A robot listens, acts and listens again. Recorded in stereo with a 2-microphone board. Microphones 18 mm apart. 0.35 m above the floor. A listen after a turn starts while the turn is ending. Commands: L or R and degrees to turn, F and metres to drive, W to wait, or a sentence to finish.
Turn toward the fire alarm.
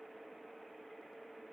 W
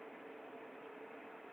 W
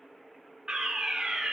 R35
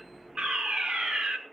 R100
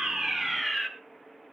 R20
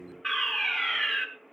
Facing the fire alarm.